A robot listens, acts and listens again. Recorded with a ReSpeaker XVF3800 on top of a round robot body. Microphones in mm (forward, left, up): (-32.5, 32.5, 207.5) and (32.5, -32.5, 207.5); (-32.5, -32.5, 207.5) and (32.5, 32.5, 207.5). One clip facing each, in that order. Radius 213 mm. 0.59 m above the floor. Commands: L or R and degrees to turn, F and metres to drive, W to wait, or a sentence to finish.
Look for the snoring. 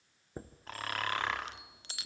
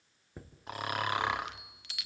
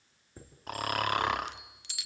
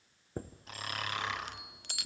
R120
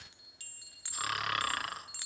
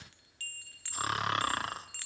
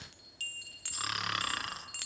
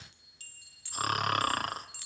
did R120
L10
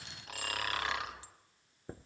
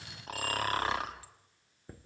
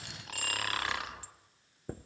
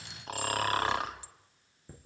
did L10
Facing the snoring.